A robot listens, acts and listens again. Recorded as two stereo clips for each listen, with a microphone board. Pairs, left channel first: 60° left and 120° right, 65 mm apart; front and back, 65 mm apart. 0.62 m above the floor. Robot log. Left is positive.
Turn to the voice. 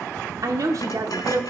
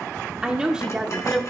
note: The woman speaking: 105° right.
cmd yaw -105
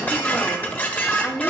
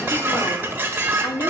note: The woman speaking is now 15° right.
cmd yaw -15
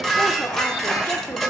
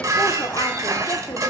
cmd idle
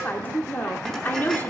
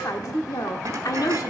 end: Found it: a woman speaking, straight ahead.